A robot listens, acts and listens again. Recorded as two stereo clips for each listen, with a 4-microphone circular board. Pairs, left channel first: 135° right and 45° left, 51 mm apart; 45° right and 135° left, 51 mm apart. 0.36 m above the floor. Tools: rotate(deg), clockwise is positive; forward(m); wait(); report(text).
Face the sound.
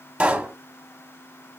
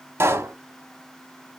rotate(-105)
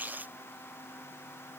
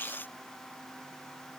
report("I heard a pop from this way, but can't make it out now.")